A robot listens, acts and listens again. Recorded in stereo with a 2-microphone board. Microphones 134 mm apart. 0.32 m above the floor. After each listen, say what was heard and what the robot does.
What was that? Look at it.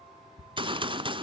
The gunshot: about 40° right or 140° right. Turn 40° right.
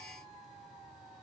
Keep listening.
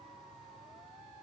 I heard a gunshot, but can't make it out now. It was about straight ahead or 100° right.